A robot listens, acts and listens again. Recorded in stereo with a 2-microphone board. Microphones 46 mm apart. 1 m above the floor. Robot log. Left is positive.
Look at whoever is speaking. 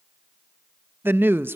note: The woman speaking: about 50° right or 130° right.
cmd yaw -50
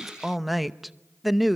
end: Found it: a woman speaking, straight ahead.